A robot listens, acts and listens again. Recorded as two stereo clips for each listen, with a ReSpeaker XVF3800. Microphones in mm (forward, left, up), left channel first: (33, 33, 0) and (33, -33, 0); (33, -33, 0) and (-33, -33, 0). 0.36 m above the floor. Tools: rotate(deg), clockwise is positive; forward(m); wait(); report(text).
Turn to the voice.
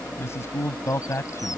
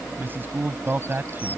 rotate(-125)
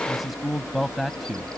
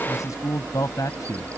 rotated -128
report("Found it: a man speaking, straight ahead.")